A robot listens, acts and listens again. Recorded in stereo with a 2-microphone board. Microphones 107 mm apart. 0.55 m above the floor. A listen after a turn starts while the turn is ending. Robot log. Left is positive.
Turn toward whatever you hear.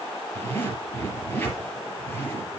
note: The zipper: about 20° left or 160° left.
cmd yaw +20
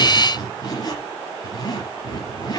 note: So it is at 140° left.
cmd yaw +140
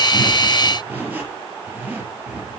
note: The zipper is now 15° right.
cmd yaw -15
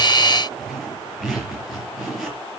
end: Facing the zipper, over 4 m away.